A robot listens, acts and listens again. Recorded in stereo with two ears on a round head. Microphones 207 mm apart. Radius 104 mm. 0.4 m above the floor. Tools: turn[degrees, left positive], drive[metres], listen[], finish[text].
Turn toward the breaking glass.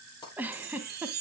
Thought: The breaking glass: about 15° left or 165° left.
Action: turn[15]
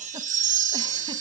Action: listen[]
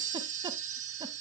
Action: finish[I heard breaking glass, but can't make it out now. It was about straight ahead or 150° left.]